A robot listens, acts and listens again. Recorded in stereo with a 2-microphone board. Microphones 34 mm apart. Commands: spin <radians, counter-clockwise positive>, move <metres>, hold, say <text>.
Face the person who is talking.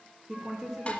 spin -0.35
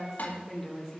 say Facing the woman speaking, 2 to 4 m away.